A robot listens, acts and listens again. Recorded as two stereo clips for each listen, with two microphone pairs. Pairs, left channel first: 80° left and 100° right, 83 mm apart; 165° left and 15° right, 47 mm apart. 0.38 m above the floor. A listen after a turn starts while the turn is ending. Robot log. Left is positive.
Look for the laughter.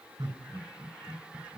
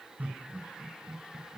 note: The laughter: 70° right.
cmd yaw -70
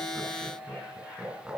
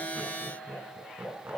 note: The laughter is now 20° right.
cmd yaw -20
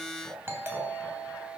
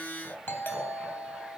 end: Found it: laughter, straight ahead.